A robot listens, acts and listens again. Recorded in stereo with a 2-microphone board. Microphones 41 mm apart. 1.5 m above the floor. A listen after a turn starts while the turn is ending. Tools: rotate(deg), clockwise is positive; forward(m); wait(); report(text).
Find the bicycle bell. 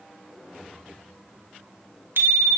rotate(70)
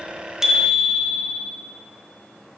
report("Facing the bicycle bell, 2 to 4 m away.")